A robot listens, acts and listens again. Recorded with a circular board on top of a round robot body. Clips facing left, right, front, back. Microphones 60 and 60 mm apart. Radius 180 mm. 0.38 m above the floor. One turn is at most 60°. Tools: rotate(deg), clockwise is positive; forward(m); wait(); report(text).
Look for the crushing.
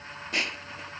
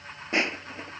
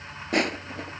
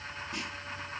rotate(30)
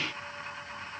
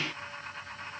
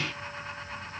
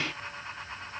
wait()
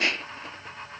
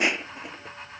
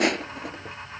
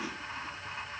rotate(15)
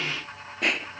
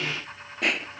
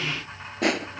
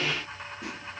report("Found it: crushing, straight ahead.")